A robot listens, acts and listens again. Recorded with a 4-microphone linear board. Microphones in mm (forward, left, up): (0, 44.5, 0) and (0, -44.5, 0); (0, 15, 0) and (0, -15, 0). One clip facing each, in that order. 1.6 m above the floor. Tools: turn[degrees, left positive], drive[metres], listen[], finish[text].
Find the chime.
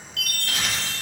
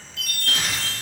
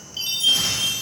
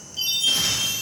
Thought: The chime: about 65° left or 115° left.
Action: turn[65]
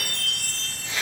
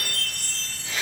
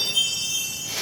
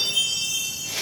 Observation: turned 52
Thought: So it is at 10° left.
Action: turn[10]
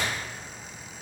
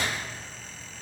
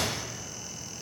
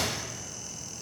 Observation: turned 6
Action: listen[]
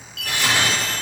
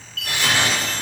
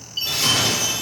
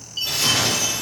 Action: finish[Facing the chime.]